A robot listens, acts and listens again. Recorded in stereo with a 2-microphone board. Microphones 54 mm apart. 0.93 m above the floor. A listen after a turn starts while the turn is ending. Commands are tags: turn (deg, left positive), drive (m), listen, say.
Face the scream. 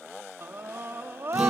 <turn deg="-50"/>
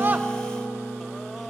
<listen/>
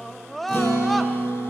<say>Found it: a scream, straight ahead.</say>